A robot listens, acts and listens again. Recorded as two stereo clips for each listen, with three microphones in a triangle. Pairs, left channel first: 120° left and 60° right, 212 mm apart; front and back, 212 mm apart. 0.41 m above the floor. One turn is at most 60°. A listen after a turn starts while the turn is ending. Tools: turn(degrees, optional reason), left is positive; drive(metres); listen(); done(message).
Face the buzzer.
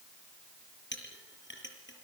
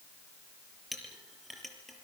listen()
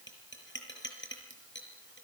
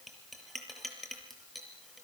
listen()
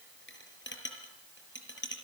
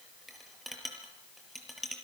done("I can't make out a buzzer to turn to.")